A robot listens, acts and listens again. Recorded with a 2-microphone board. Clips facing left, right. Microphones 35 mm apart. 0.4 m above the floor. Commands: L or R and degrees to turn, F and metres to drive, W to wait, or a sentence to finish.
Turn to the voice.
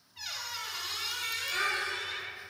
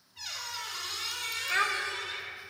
R60
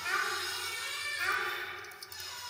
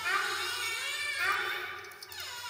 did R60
R20
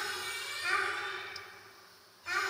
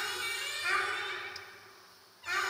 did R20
Found it: a child speaking, straight ahead, under 1 m away.